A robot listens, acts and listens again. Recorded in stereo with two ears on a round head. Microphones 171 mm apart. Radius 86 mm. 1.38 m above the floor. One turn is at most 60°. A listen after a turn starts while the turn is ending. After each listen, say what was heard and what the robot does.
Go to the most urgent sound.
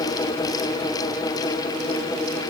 Keep listening.
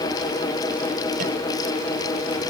Keep listening.
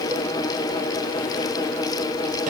I can't make out anything urgent.